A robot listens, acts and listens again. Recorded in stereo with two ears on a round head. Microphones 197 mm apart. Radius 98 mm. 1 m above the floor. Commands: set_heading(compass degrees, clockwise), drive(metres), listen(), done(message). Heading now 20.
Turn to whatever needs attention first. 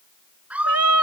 set_heading(50)
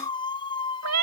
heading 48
set_heading(28)
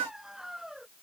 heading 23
done("Found it: a scream, straight ahead.")